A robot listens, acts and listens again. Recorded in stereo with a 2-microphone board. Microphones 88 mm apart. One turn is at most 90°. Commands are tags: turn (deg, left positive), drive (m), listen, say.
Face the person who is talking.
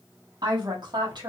<turn deg="-55"/>
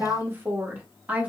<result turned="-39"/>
<turn deg="-15"/>
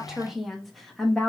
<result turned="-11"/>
<say>Facing the woman speaking, 1 to 2 m away.</say>